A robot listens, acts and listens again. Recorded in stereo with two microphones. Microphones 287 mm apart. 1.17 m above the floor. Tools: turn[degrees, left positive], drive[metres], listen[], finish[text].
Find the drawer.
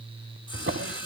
Thought: The drawer: about 50° right or 130° right.
Action: turn[-50]
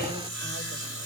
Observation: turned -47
Action: listen[]
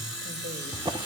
Thought: So it is at 20° right.
Action: turn[-20]
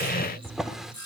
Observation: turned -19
Action: finish[Found it: a drawer, straight ahead.]